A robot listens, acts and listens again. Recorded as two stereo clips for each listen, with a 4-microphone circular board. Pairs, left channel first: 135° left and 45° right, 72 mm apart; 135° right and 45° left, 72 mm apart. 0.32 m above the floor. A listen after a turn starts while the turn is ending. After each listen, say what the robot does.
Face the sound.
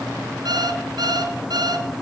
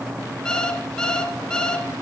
Turn 55° right.
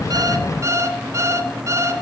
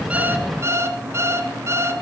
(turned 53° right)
Facing the alarm clock.